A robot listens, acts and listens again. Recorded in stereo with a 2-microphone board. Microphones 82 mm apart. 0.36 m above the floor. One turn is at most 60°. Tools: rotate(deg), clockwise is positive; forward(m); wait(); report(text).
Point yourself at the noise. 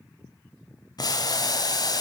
rotate(-55)
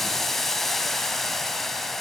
report("Found it: boiling, straight ahead, 1 to 2 m away.")